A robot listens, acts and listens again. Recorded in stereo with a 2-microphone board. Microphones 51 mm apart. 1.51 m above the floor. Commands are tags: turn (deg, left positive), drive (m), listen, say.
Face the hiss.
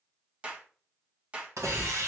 <turn deg="-90"/>
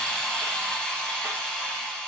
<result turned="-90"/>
<turn deg="10"/>
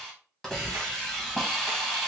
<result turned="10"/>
<say>Facing the hiss.</say>